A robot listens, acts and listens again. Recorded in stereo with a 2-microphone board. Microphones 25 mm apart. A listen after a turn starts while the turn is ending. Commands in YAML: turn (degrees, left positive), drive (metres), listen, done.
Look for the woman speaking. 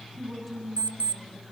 turn: 30
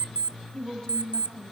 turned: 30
turn: 150
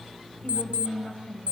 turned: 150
turn: 40
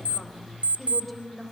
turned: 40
done: "Found it: a woman speaking, straight ahead, 2 to 4 m away."